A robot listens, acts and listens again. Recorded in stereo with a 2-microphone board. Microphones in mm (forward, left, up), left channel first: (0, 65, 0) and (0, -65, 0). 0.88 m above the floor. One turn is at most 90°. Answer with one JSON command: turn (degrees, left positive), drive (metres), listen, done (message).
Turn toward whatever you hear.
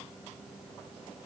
{"listen": true}
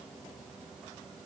{"listen": true}
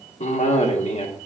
{"turn": 60}
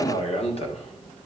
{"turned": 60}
{"turn": 55}
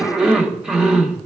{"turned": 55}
{"done": "Facing the cough."}